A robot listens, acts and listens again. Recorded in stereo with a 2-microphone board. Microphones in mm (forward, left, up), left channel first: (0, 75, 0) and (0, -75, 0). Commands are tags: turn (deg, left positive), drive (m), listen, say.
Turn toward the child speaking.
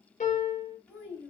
<turn deg="30"/>
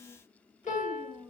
<turn deg="30"/>
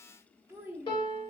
<turn deg="-10"/>
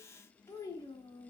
<turn deg="35"/>
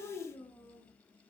<turn deg="20"/>
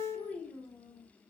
<turn deg="10"/>
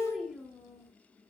<say>Facing the child speaking, 1 to 2 m away.</say>